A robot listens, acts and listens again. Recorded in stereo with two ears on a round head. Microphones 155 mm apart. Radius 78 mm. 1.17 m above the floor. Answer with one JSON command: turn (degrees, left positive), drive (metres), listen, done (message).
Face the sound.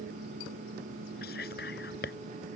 {"turn": 60}
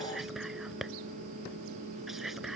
{"done": "Facing the whispering."}